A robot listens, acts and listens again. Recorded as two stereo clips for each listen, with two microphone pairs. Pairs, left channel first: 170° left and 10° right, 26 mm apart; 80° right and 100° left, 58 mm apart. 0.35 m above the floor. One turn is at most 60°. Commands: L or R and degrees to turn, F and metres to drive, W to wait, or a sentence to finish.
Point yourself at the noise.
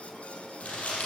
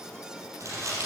L60
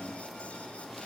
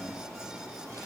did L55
L60
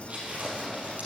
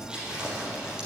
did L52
L25
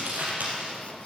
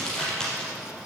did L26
Facing the crumpling, 2 to 4 m away.